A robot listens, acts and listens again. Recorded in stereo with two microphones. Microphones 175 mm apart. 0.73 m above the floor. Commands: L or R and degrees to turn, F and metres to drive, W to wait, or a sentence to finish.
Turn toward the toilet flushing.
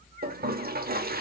R60
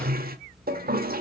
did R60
R60
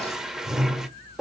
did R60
Found it: a toilet flushing, straight ahead, 1 to 2 m away.